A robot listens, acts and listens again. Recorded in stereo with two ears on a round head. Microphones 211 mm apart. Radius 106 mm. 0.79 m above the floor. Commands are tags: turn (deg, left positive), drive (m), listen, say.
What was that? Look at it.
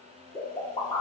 <turn deg="20"/>
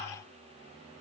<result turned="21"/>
<listen/>
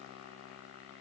<say>I heard a pop, but can't make it out now. It was about 5° right or 140° left.</say>